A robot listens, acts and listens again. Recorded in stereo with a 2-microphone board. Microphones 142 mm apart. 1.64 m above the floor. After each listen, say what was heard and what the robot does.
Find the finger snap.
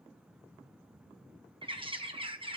Keep listening.
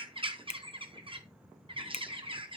The finger snap: about 45° left or 135° left. Turn 45° left.
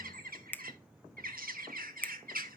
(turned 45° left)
So it is at 15° left. Turn 15° left.
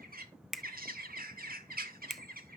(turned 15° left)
Facing the finger snap.